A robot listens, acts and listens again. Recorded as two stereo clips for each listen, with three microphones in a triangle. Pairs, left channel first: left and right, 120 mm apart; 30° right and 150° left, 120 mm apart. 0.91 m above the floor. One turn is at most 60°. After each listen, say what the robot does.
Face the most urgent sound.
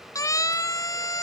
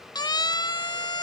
Turn 25° left.
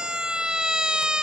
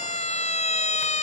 Found it: a siren, straight ahead.